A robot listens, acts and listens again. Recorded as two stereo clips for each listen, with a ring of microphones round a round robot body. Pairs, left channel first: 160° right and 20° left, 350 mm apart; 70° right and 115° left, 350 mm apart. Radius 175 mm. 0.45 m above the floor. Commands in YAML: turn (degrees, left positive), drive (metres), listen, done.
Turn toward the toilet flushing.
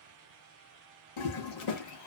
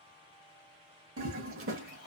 turn: 165
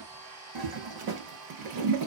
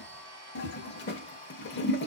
done: "Found it: a toilet flushing, straight ahead, under 1 m away."